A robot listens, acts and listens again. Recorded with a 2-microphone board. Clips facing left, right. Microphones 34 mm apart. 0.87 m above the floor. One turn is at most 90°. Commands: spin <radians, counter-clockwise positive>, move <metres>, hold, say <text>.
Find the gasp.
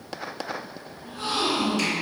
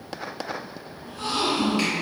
spin 0.61
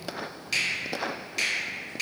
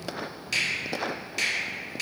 hold
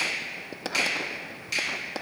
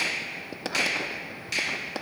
say I heard a gasp, but can't make it out now. It was about straight ahead or 110° left.